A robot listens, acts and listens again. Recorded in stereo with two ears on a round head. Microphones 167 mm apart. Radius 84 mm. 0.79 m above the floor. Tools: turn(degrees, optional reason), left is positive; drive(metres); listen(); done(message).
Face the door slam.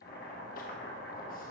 listen()
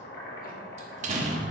turn(degrees=-40, reason="The door slam: about 40° right or 140° right.")
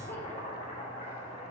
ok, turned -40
listen()
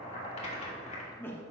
done("I heard a door slam, but can't make it out now. It was about straight ahead or 100° right.")